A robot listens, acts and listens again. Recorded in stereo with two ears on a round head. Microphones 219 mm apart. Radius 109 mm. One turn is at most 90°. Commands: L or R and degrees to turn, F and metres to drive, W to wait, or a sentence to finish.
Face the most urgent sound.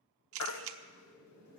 L70
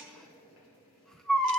Found it: a baby crying, straight ahead, 1 to 2 m away.